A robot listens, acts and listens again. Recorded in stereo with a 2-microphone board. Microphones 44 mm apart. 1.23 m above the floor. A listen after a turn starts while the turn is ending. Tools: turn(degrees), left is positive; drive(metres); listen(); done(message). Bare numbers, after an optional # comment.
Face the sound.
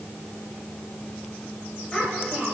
turn(30)
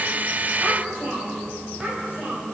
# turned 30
# So it is at 35° right.
turn(-35)
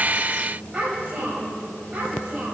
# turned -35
# The child speaking is now 20° right.
turn(-20)
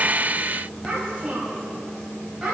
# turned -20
done("Facing the child speaking, over 4 m away.")